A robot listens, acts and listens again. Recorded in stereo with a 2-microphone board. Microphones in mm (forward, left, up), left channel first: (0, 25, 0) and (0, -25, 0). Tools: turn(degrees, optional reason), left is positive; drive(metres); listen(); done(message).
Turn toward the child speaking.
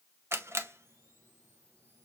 listen()
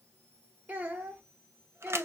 turn(degrees=-35, reason="The child speaking: about 35° right or 145° right.")
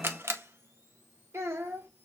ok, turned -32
turn(degrees=-110, reason="So it is at 110° right.")
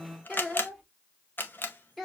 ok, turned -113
done("Found it: a child speaking, straight ahead, 1 to 2 m away.")